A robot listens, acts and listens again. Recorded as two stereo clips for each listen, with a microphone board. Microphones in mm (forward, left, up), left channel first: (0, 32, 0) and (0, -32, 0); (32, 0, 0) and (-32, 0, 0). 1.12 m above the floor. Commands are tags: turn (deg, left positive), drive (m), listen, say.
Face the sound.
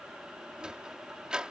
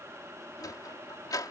<turn deg="-15"/>
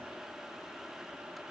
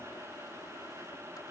<listen/>
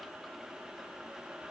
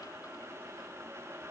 <listen/>
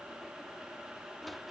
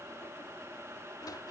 <say>Facing the sliding door.</say>